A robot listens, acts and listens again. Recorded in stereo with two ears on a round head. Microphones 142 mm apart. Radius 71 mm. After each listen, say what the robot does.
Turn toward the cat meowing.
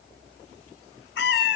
Turn 70° left.
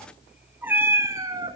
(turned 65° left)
Turn 30° right.
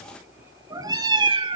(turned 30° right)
Turn 35° right.
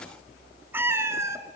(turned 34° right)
Turn 20° right.
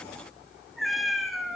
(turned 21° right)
Found it: a cat meowing, straight ahead.